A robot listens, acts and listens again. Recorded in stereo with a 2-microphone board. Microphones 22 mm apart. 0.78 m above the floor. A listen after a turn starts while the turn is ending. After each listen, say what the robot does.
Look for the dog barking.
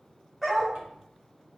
Turn 15° right.
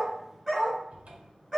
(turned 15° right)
Turn 30° right.
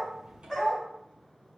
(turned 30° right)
Turn 15° left.
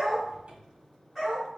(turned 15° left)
Turn 10° right.
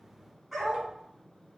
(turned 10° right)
Found it: a dog barking, straight ahead, 2 to 4 m away.